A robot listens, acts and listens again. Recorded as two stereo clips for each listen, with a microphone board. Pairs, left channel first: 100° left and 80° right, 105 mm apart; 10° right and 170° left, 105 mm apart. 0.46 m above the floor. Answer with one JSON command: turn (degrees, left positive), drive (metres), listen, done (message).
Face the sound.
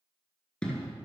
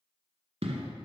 {"turn": 180}
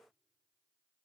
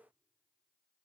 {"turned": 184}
{"done": "Facing where the explosion came from. I can't hear it now."}